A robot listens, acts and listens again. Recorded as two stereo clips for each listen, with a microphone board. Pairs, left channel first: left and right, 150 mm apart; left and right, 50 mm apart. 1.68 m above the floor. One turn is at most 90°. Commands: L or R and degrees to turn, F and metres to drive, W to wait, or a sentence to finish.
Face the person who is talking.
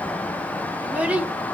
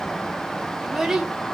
R30
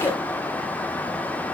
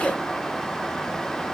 L20
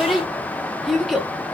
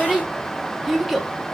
Facing the child speaking, under 1 m away.